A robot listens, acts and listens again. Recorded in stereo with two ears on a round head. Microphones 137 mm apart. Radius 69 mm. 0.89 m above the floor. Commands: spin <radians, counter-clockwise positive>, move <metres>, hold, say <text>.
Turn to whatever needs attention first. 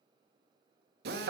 hold
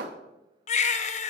spin 0.79
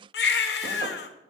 spin 1.48
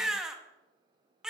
say Found it: a baby crying, straight ahead.